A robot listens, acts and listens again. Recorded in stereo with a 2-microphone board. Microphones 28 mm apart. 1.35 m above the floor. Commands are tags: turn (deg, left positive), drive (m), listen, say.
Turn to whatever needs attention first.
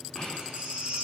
<turn deg="-55"/>
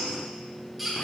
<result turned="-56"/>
<say>Facing the baby crying, 2 to 4 m away.</say>